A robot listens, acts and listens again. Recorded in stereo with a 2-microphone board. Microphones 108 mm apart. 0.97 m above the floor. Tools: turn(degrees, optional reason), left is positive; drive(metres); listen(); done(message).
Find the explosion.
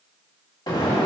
turn(degrees=40, reason="The explosion: about 40° left or 140° left.")
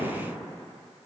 listen()
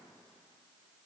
done("I heard an explosion, but can't make it out now. It was about straight ahead or 100° left.")